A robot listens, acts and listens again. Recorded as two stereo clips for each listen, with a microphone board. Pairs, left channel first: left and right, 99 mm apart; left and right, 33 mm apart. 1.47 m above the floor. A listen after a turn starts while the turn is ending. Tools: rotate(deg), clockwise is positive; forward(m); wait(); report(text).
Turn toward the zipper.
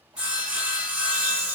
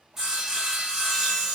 wait()
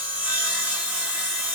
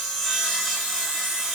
wait()
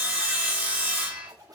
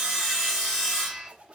rotate(40)
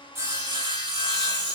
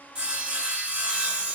wait()
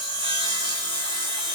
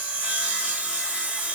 wait()
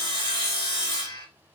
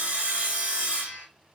report("I heard a zipper, but can't make it out now. It was about straight ahead or 100° right.")